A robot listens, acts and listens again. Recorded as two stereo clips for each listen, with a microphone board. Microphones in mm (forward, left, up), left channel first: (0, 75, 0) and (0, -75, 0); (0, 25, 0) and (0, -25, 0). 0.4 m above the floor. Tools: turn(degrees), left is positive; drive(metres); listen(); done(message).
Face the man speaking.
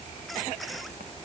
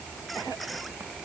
listen()
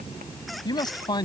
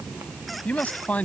turn(degrees=30)
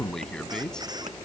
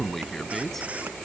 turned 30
done("Facing the man speaking.")